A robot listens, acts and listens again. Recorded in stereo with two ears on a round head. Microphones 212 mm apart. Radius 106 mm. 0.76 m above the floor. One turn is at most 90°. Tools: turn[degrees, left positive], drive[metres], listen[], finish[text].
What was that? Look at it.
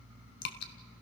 Thought: The dripping: about 50° left or 130° left.
Action: turn[50]
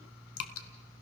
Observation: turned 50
Thought: So it is at 75° left.
Action: turn[75]
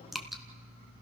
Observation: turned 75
Action: finish[Facing the dripping, 1 to 2 m away.]